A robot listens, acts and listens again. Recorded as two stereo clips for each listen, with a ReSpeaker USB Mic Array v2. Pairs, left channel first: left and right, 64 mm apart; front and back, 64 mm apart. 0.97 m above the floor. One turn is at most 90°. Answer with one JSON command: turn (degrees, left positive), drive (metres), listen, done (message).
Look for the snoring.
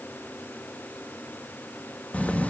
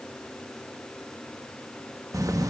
{"listen": true}
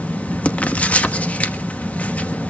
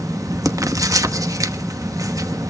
{"listen": true}
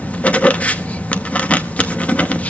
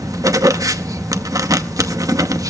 {"done": "I can't make out snoring, only writing."}